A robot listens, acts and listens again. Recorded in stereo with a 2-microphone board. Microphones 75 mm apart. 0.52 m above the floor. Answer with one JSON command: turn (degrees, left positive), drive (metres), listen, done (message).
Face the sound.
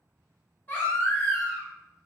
{"turn": 30}
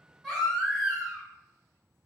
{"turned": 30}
{"done": "Found it: a baby crying, straight ahead, 1 to 2 m away."}